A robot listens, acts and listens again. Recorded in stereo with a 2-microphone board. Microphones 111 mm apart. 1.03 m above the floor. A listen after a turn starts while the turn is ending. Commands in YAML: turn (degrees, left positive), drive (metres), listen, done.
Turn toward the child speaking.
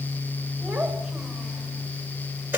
turn: -30
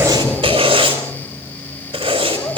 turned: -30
listen: true
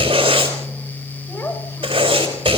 turn: 25
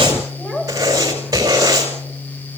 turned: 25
turn: 10
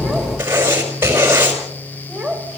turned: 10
done: "Found it: a child speaking, straight ahead, over 4 m away."